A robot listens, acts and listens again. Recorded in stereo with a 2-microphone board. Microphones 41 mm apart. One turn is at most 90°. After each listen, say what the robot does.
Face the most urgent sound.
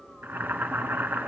Keep listening.
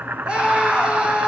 Turn 25° right.
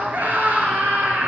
Turn 90° right.
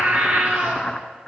Turn 55° right.
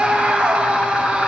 Turn 25° right.
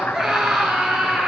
Facing the scream.